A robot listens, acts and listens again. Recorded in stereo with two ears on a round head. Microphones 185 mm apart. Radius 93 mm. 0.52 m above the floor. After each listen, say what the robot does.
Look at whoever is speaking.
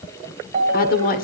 Turn 50° left.
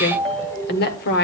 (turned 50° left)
Turn 70° left.
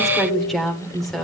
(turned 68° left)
Facing the woman speaking.